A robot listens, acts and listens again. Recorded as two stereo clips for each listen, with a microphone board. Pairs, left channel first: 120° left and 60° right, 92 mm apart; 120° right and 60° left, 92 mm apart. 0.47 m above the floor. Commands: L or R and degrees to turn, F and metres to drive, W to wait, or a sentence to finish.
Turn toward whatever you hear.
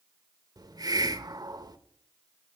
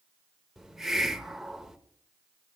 R25
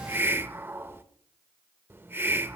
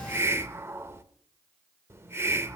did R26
Found it: a hiss, straight ahead, under 1 m away.